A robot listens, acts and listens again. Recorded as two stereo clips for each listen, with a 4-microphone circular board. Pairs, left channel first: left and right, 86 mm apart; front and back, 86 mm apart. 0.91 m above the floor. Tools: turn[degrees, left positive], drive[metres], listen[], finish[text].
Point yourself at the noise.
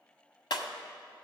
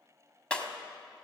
Thought: The breaking glass: 75° left.
Action: turn[75]
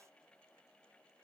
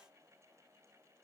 Action: finish[I heard breaking glass from this way, but can't make it out now.]